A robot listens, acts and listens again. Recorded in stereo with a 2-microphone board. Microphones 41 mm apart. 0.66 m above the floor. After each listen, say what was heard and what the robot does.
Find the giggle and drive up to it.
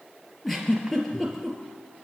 Turn 30° left.
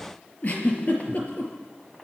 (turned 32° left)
So it is at 140° left. Turn 140° left.
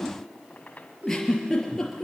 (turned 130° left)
The giggle is now 10° left. Turn 10° left.
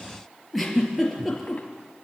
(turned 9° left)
Drive 1.0 m forward.
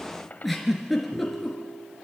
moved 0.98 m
Drive 1.0 m forward.
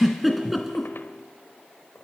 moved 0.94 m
Drive 1.0 m forward.
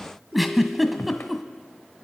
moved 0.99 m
Drive 1.0 m forward.
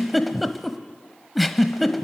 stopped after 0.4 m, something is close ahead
Arrived at the giggle, straight ahead.